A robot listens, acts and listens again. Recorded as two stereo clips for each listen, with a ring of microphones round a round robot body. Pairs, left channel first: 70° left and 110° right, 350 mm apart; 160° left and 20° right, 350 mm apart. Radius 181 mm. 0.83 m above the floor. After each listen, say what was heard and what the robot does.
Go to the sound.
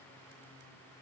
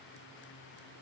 Keep listening.
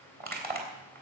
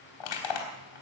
The crushing: straight behind. Turn 180° left.
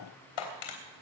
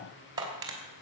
The crushing is now 55° left. Turn 55° left.
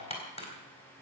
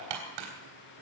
Drive 1.0 m forward.
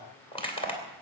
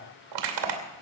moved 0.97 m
The crushing is now 10° right. Turn 10° right.
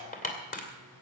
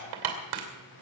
Drive 1.0 m forward.
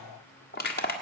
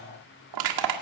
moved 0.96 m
Drive 1.0 m forward.
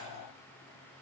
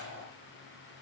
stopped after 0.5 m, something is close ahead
Keep listening.
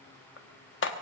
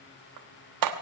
The crushing is now 10° left. Turn 10° left.
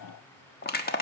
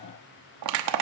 I am next to the crushing.